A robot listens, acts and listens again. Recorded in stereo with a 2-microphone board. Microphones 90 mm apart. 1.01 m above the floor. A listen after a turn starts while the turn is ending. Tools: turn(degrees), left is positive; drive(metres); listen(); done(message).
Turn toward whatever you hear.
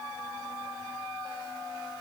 listen()
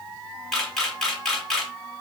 turn(degrees=30)
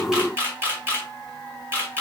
turn(degrees=-25)
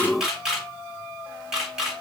done("Found it: a camera shutter, straight ahead, 1 to 2 m away.")